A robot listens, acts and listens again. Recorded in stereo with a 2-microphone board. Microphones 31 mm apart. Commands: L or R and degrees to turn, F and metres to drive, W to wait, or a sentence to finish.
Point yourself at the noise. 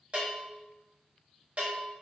R40
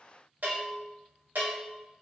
R100
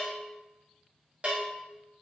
R40
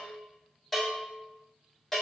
L10
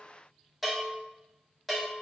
Facing the bell.